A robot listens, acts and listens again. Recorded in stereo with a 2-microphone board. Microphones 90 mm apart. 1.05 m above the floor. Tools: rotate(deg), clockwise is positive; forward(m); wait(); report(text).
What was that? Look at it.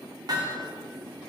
rotate(45)
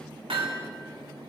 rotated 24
rotate(110)
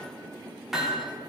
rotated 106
report("Facing the hammering.")